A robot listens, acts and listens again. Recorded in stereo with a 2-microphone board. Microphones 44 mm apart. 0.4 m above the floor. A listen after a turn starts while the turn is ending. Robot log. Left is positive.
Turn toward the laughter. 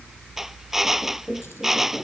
note: The laughter: about 35° right or 145° right.
cmd yaw -35
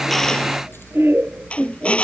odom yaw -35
note: So it is at 110° right.
cmd yaw -110
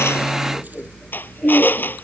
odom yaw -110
end: Facing the laughter.